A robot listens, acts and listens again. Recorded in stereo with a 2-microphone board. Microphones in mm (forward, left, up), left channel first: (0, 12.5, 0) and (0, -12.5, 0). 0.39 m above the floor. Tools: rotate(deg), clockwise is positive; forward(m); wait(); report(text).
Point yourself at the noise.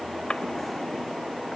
rotate(-40)
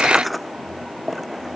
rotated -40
report("Facing the drawer.")